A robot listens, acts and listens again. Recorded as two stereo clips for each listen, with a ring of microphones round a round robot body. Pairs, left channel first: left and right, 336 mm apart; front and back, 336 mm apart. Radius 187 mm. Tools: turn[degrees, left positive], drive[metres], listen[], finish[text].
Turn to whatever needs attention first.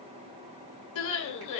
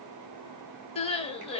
Thought: The crying: 70° left.
Action: turn[70]
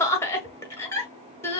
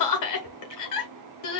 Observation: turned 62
Thought: The crying is now 10° left.
Action: turn[10]
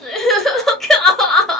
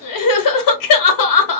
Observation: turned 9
Action: finish[Found it: crying, straight ahead, 1 to 2 m away.]